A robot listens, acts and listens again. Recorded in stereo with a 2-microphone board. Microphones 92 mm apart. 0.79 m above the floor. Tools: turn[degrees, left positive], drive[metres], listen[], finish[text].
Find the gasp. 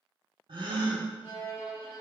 Thought: The gasp: about 60° right or 120° right.
Action: turn[-60]
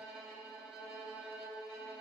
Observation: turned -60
Action: listen[]
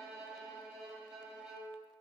Action: finish[I heard a gasp, but can't make it out now. It was about straight ahead or 60° right.]